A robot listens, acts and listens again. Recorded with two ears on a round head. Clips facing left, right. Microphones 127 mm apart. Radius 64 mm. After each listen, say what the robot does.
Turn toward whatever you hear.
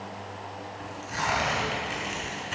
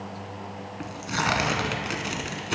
Turn 70° right.
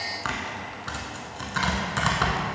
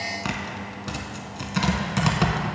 Turn 20° right.
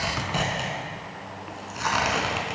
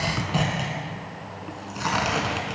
Found it: tearing paper, straight ahead, under 1 m away.